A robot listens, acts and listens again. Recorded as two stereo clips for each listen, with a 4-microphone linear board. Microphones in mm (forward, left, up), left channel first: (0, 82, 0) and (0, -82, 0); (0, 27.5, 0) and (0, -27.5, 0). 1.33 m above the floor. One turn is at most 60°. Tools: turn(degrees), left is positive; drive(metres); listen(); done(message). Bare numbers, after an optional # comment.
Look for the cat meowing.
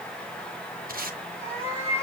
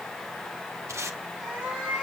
# The cat meowing: about 15° right or 165° right.
turn(-15)
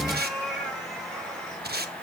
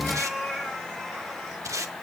turn(30)
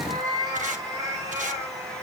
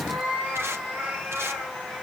# So it is at 20° right.
turn(-20)
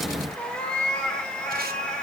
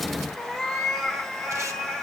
done("Facing the cat meowing, 2 to 4 m away.")